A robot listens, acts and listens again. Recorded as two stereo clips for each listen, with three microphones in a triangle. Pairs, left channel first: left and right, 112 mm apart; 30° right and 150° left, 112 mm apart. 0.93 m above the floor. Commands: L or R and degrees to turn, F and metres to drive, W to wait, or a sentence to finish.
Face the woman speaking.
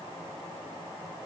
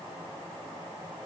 W
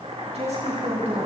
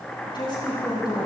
R80
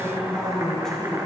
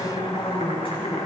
Facing the woman speaking.